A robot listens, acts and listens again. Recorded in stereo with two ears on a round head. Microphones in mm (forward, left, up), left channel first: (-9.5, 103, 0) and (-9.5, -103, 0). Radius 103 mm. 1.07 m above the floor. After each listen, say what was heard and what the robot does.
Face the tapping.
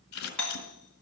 Keep listening.
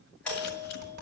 The tapping: about 55° right or 125° right. Turn 55° right.
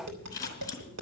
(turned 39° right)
So it is at 85° right. Turn 85° right.
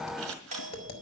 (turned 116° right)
The tapping is now 30° left. Turn 30° left.
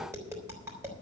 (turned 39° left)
The tapping is now 10° right. Turn 10° right.
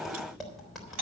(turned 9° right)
Facing the tapping, 2 to 4 m away.